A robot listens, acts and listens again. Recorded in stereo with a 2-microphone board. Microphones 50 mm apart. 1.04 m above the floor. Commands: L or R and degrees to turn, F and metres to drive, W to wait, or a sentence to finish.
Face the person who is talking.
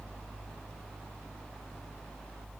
W
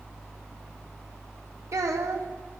R90
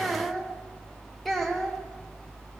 Found it: a child speaking, straight ahead, 1 to 2 m away.